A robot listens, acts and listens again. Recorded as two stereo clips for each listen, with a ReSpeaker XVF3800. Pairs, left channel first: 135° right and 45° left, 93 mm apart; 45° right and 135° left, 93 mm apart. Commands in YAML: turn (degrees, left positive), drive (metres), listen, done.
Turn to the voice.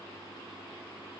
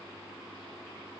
listen: true
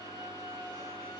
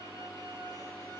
listen: true
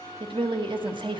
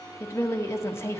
turn: 15
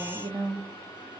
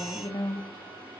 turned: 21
done: "Facing the woman speaking."